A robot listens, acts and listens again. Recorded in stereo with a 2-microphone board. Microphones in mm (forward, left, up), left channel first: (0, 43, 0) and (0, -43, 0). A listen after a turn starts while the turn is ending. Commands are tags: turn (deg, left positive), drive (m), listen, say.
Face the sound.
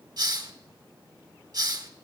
<turn deg="-50"/>
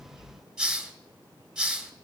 <say>Found it: a hiss, straight ahead, 1 to 2 m away.</say>